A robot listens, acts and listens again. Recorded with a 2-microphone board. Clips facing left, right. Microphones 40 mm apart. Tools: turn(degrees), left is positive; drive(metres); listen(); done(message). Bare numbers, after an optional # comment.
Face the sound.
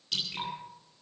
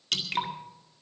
turn(-90)
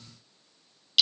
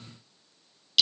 done("Found it: dripping, straight ahead, 2 to 4 m away.")